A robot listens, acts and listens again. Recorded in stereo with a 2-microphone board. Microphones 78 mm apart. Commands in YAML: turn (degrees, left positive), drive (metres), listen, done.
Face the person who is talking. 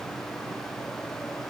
listen: true
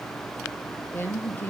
turn: 30
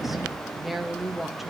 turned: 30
done: "Found it: a woman speaking, straight ahead."